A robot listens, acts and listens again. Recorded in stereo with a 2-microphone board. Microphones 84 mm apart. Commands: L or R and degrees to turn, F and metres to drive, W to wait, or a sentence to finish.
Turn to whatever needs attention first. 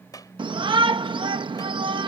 R70
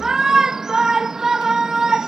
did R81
R10
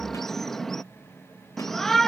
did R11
Facing the shout.